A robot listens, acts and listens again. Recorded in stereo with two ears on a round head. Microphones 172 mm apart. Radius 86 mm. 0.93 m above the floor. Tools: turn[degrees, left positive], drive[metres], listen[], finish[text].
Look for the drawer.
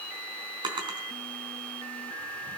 Thought: The drawer: about 25° right or 155° right.
Action: turn[-25]
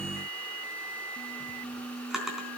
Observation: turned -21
Action: finish[Found it: a drawer, straight ahead, 2 to 4 m away.]